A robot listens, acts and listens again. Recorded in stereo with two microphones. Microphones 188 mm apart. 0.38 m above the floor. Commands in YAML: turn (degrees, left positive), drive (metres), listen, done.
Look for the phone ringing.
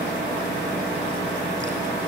listen: true
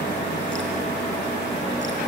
listen: true
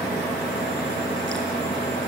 done: "I can't make out a phone ringing to turn to."